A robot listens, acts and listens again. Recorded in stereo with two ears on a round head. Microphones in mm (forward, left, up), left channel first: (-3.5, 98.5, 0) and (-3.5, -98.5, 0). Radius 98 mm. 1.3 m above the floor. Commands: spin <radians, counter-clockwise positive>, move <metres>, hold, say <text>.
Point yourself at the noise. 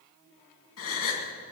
spin 1.05
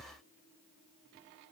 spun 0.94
hold
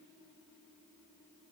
say I heard a gasp, but can't make it out now. It was about 5° left or 65° left.